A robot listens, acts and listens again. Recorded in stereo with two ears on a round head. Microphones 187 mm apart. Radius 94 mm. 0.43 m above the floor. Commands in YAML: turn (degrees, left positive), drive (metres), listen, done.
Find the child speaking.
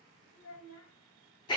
turn: 70
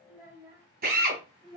turn: -30
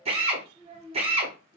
turn: -40
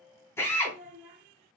turn: -15
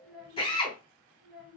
done: "Facing the child speaking."